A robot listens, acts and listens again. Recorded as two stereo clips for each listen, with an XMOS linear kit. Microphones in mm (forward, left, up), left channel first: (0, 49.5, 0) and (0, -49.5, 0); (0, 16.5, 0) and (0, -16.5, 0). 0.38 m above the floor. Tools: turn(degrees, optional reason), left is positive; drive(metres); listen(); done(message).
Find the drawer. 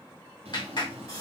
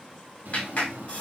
turn(degrees=-90)
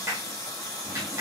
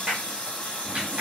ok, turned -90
listen()
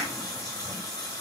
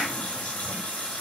listen()
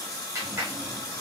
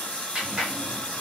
done("I heard a drawer from this way, but can't make it out now.")